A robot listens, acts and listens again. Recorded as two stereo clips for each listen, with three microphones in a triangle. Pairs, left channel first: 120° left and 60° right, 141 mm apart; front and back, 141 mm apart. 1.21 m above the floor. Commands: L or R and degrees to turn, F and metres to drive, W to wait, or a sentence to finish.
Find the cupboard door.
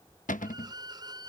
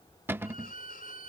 L105
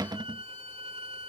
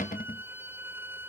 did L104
Found it: a cupboard door, straight ahead.